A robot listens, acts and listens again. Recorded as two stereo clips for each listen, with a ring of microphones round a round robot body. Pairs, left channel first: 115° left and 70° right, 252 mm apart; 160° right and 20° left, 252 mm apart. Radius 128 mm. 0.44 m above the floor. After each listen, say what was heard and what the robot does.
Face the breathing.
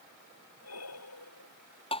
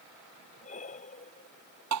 The breathing: 140° left. Turn 140° left.
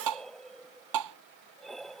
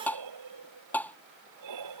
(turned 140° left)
The breathing is now 25° left. Turn 25° left.
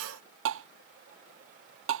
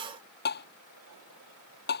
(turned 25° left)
Keep listening.
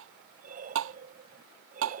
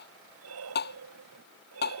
The breathing is now 10° right. Turn 10° right.
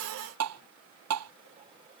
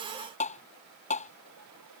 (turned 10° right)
Keep listening.
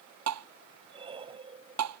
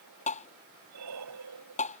Found it: breathing, straight ahead.